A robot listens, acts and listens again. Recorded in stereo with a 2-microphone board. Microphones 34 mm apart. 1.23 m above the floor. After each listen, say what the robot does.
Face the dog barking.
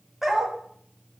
Turn 30° right.
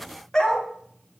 Turn 25° left.
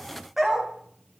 Turn 10° right.
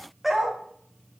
Found it: a dog barking, straight ahead.